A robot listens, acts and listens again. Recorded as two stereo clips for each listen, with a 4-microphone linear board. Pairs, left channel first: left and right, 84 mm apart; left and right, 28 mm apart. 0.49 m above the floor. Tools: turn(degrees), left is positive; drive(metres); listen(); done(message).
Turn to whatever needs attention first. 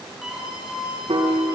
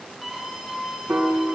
turn(degrees=-30)
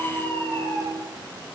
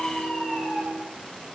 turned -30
turn(degrees=25)
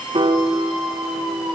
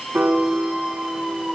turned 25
done("Facing the scream, over 4 m away.")